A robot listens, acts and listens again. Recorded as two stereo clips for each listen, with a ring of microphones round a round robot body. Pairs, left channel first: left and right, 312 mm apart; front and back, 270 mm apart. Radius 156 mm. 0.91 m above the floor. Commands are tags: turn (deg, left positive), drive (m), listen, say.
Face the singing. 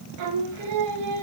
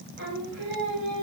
<turn deg="-120"/>
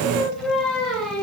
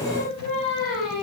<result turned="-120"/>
<say>Found it: singing, straight ahead, 2 to 4 m away.</say>